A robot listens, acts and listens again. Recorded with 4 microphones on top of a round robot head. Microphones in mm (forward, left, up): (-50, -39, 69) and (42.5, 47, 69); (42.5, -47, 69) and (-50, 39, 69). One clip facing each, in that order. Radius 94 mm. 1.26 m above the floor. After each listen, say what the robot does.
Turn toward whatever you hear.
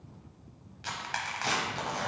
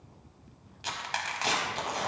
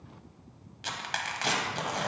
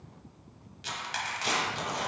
Turn 25° right.
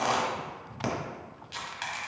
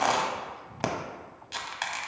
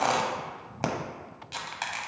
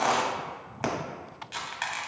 Turn 10° left.
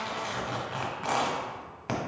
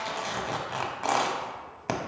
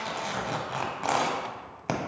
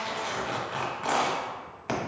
Found it: tearing paper, straight ahead, under 1 m away.